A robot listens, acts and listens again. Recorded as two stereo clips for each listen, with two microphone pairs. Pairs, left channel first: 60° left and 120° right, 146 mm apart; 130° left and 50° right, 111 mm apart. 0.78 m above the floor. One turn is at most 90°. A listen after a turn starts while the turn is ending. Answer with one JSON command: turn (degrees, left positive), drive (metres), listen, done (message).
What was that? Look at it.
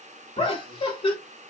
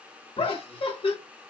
{"turn": 90}
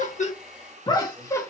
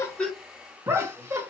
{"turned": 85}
{"done": "Facing the laughter, 1 to 2 m away."}